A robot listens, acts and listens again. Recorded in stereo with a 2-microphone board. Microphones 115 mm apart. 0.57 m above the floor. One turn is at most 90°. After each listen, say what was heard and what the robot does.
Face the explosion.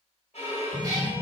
Turn 30° right.
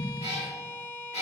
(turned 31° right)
Keep listening.
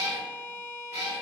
I heard an explosion, but can't make it out now. It was about 25° left or 145° right.